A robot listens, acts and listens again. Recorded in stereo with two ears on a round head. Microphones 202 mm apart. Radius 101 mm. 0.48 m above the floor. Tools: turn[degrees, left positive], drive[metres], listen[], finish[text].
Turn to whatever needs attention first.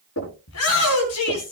Thought: The shout: about 70° left or 110° left.
Action: turn[70]
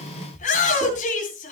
Thought: So it is at 35° left.
Action: turn[35]
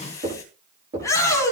Thought: The shout is now 15° left.
Action: turn[15]
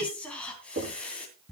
Action: finish[Found it: a shout, straight ahead, 2 to 4 m away.]